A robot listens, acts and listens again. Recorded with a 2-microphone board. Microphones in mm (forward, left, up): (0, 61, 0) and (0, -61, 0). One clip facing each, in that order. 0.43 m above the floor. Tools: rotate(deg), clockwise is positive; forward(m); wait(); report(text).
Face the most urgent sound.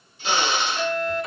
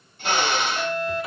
rotate(20)
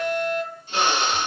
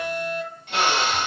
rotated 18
rotate(140)
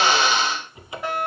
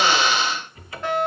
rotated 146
rotate(-10)
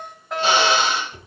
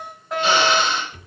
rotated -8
report("Facing the fire alarm, 2 to 4 m away.")